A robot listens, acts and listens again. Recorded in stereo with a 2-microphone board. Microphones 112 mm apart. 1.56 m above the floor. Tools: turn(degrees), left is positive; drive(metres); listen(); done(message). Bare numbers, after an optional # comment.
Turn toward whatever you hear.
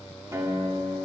# The guitar: about 25° right or 155° right.
turn(-25)
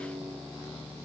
# So it is at 125° right.
turn(-125)
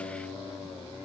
listen()
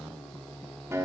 # The guitar is now 30° right.
turn(-30)
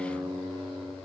done("Found it: a guitar, straight ahead, 1 to 2 m away.")